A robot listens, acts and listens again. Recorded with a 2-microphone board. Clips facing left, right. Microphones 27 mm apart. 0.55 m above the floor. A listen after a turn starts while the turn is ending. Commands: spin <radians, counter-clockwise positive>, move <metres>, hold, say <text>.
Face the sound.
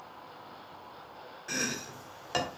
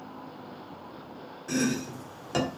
spin 0.52
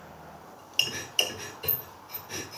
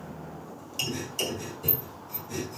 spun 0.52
spin 2.36
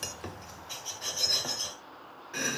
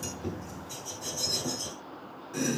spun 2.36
spin 0.70
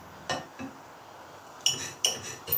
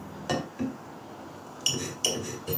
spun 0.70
say Facing the chopping.